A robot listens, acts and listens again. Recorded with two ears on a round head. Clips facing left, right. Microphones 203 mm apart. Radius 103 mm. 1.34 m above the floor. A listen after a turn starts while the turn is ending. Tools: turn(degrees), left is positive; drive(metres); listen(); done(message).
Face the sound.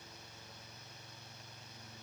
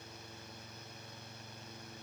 listen()
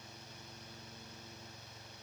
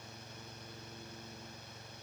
listen()
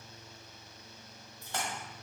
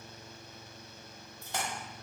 turn(degrees=-15)
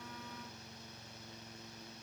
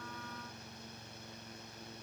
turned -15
listen()
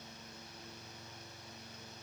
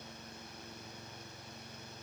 done("I heard a splash, but can't make it out now. It was about straight ahead or 150° right.")